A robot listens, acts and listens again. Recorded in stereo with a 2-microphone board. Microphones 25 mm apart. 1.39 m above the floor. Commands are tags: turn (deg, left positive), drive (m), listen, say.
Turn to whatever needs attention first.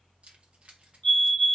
<turn deg="50"/>
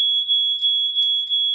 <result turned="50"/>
<turn deg="15"/>
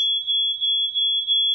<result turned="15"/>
<say>Facing the fire alarm, 2 to 4 m away.</say>